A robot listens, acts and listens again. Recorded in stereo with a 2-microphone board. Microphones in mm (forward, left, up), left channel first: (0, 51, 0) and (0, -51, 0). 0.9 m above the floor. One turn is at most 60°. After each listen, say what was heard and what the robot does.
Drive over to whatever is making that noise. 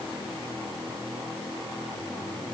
Keep listening.
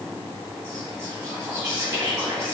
The whispering: about 40° right or 140° right. Turn 40° right.
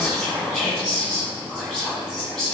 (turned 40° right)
Drive 1.0 m forward.
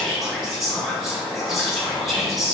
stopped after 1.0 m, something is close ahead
Arrived at the whispering, straight ahead.